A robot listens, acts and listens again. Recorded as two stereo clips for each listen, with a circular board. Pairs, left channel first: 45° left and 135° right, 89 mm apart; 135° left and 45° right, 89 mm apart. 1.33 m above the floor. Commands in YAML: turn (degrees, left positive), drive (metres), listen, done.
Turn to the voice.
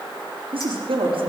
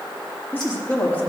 turn: -155
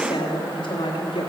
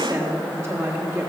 turn: 15
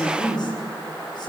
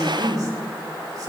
done: "Found it: a woman speaking, straight ahead, 2 to 4 m away."